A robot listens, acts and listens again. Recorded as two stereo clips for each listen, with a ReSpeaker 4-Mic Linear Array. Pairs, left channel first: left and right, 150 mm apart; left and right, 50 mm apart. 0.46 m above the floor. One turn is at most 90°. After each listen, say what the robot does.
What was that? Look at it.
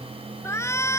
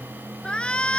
Turn 20° left.
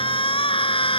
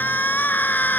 Turn 90° left.
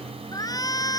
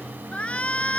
Turn 25° left.
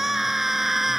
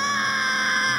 Found it: a shout, straight ahead.